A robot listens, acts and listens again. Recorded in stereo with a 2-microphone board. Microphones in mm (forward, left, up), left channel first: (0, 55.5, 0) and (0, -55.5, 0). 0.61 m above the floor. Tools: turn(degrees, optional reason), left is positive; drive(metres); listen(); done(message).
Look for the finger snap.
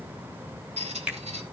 turn(degrees=-30)
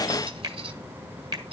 turn(degrees=-140, reason="So it is at 140° right.")
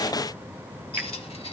listen()
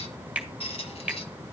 turn(degrees=-10, reason="The finger snap is now 10° right.")
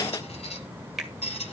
done("Found it: a finger snap, straight ahead.")